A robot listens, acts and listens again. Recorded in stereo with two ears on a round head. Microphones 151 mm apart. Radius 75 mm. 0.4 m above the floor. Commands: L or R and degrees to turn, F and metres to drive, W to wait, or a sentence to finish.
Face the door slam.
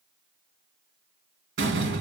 R90
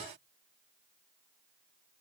I heard a door slam from this way, but can't make it out now.